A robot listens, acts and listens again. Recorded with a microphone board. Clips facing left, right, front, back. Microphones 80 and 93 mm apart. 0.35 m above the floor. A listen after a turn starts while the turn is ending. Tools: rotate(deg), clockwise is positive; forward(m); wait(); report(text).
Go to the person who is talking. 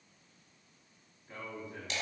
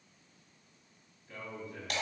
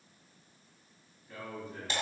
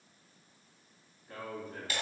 rotate(-150)
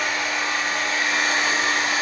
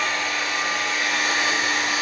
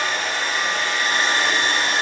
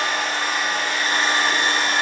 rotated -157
wait()
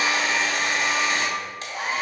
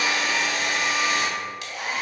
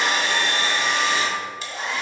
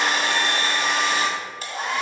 wait()
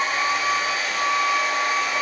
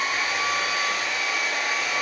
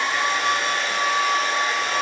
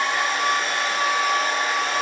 report("Facing where the man speaking came from. I can't hear it now. I did not reach it.")